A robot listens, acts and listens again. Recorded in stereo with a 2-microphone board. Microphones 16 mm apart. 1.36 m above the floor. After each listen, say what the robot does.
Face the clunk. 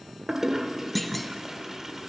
Turn 30° left.
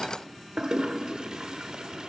Keep listening.
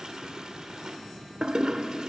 I heard a clunk, but can't make it out now. It was about 25° right or 145° left.